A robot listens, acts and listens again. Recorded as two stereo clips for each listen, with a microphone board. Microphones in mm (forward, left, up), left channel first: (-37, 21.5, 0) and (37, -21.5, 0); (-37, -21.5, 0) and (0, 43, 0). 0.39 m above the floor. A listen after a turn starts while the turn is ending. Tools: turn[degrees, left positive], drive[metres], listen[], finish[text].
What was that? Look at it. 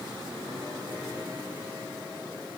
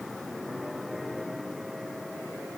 Action: listen[]
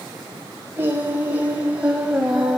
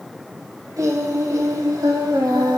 Thought: The singing: 50° left.
Action: turn[50]
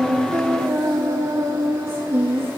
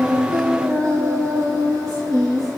Thought: The singing is now 30° left.
Action: turn[30]
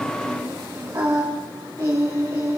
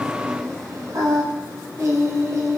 Thought: The singing is now 15° left.
Action: turn[15]
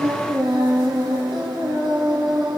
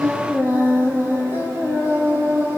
Action: finish[Found it: singing, straight ahead.]